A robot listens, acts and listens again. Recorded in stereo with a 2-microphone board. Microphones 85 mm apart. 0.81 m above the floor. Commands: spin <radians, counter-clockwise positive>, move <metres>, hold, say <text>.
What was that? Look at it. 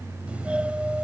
spin -0.52
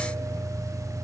spin -2.36
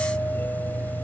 spin 0.35
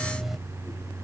say Found it: a doorbell, straight ahead.